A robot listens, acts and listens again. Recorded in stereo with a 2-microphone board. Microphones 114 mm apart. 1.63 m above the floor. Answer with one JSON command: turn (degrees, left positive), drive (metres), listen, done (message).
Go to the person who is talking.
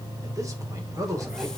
{"turn": -30}
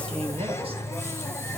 {"listen": true}
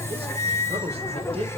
{"turn": -120}
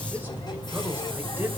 {"listen": true}
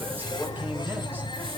{"listen": true}
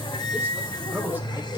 {"turn": -15}
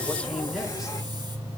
{"listen": true}
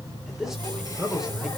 {"drive": 1.0}
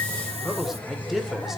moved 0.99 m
{"drive": 1.0}
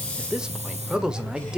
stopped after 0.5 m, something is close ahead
{"done": "I am next to the man speaking."}